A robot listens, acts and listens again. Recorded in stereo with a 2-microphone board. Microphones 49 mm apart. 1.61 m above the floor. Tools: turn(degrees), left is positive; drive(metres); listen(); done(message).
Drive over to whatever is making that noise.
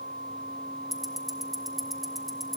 turn(degrees=30)
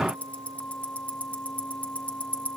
turn(degrees=150)
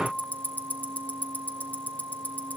turn(degrees=35)
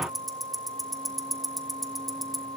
drive(metres=1.0)
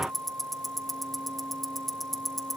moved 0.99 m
drive(metres=1.0)
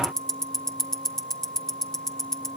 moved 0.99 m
turn(degrees=10)
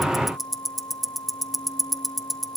drive(metres=1.0)
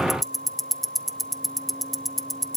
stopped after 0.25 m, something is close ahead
done("I am next to the ticking.")